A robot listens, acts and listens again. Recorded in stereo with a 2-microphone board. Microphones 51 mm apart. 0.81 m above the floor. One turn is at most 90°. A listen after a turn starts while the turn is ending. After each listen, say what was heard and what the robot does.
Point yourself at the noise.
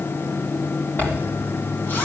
The zipper: about 35° left or 145° left. Turn 35° left.
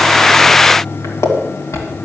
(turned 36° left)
So it is at 110° left. Turn 90° left.
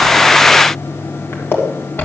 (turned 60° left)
The zipper is now 50° left. Turn 50° left.
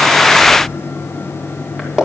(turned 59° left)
The zipper is now 10° right. Turn 10° right.
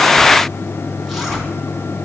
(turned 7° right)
Keep listening.
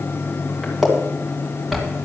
Found it: a zipper, straight ahead.